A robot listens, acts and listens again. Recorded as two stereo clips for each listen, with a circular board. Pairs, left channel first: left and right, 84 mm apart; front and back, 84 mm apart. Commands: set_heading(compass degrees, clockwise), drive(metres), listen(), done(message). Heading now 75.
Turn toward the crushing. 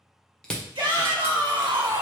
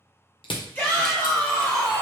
set_heading(65)
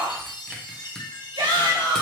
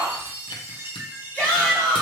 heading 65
listen()
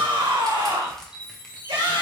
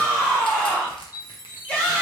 listen()
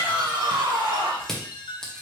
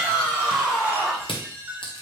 done("Found it: crushing, straight ahead.")